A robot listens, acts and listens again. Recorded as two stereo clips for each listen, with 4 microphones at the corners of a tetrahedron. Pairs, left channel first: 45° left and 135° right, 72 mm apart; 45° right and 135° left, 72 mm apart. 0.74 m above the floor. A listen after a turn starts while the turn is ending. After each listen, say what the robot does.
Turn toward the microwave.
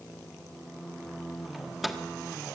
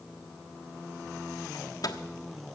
Turn 45° right.
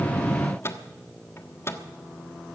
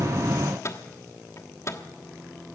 Facing the microwave.